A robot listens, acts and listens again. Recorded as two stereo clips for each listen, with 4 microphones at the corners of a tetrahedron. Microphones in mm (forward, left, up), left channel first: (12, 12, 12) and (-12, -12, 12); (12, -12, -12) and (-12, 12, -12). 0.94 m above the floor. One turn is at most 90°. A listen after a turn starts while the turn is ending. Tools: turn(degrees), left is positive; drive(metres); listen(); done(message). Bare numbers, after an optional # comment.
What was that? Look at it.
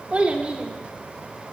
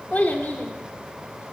# The child speaking: 75° right.
turn(-75)
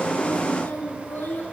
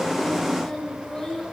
# The child speaking is now 30° left.
turn(30)
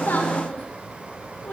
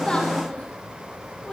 # The child speaking is now 15° left.
turn(15)
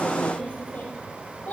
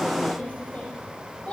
# The child speaking is now 10° left.
turn(10)
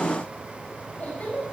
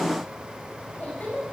done("Facing the child speaking, over 4 m away.")